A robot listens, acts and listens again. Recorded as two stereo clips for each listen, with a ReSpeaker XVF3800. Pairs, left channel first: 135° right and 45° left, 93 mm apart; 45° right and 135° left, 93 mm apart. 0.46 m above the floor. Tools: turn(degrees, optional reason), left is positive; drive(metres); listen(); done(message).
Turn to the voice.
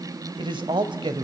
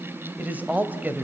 turn(degrees=65, reason="The man speaking: 65° left.")
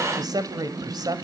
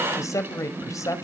done("Facing the man speaking.")